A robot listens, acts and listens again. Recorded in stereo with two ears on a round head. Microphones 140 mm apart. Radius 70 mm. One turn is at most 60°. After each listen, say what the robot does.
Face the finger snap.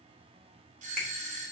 Turn 30° left.
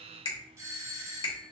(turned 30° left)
Turn 60° left.
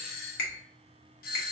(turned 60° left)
Turn 60° left.
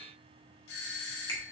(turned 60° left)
Turn 10° left.
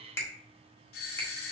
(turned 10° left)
Turn 15° left.
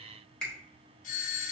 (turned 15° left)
Found it: a finger snap, straight ahead.